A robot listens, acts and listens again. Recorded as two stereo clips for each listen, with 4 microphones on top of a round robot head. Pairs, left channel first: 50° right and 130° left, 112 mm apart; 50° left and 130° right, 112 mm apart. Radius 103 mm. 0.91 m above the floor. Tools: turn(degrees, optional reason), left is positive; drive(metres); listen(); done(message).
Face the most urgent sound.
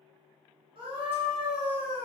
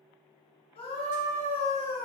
turn(degrees=90, reason="The scream: 90° left.")
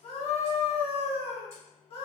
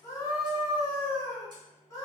turn(degrees=-15, reason="The scream is now 15° right.")
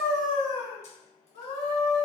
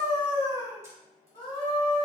done("Facing the scream, 1 to 2 m away.")